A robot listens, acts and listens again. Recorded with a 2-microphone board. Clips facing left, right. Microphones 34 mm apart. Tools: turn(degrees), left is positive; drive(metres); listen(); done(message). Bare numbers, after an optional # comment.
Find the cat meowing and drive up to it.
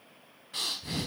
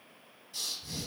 listen()
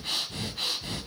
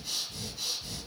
listen()
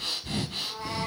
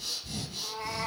# The cat meowing: about 30° right or 150° right.
turn(-30)
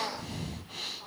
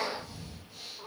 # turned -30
# So it is at 120° right.
turn(-120)
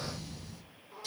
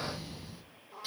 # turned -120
drive(1.0)
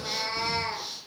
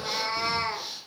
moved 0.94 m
drive(1.0)
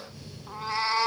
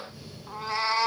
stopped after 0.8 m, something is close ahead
done("Arrived at the cat meowing, straight ahead.")